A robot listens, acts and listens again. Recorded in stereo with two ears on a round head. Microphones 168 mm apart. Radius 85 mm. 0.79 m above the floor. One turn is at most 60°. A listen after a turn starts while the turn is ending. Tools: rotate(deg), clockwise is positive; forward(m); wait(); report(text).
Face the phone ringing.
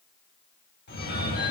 rotate(-55)
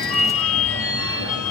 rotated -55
rotate(-60)
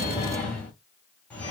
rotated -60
rotate(-10)
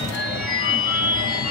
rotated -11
report("Facing the phone ringing, 1 to 2 m away.")